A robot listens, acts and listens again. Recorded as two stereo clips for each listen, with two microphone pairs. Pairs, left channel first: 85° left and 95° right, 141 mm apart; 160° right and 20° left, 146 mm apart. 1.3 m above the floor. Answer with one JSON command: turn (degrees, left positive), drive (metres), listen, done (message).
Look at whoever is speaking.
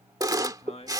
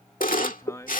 {"turn": 130}
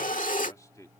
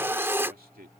{"turn": 20}
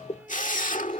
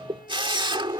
{"listen": true}
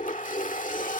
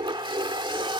{"listen": true}
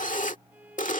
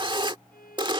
{"done": "I heard a man speaking from this way, but can't make it out now."}